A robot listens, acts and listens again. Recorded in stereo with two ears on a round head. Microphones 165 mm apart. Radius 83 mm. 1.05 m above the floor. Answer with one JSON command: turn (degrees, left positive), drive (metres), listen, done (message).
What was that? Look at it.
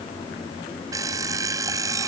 {"turn": -20}
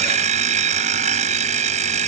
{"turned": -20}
{"turn": -140}
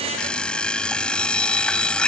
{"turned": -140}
{"done": "Found it: an alarm clock, straight ahead."}